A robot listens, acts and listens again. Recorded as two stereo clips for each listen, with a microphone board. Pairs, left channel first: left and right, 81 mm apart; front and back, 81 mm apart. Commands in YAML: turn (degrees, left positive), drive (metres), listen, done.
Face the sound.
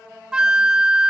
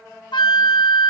turn: -10
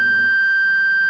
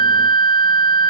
done: "Facing the flute."